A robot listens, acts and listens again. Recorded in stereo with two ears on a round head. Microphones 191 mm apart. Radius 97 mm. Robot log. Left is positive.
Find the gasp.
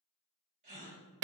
note: The gasp: about 35° right or 145° right.
cmd yaw -35
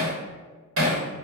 cmd idle
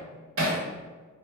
end: I heard a gasp, but can't make it out now. It was about straight ahead or 110° right.